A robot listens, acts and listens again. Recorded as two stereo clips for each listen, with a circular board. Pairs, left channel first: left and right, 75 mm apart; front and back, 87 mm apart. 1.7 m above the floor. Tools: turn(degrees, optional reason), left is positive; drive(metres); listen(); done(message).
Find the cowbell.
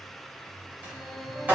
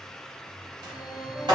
listen()
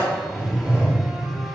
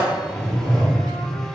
listen()
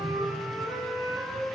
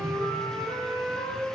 done("I can't make out a cowbell, only a sliding door and a flute.")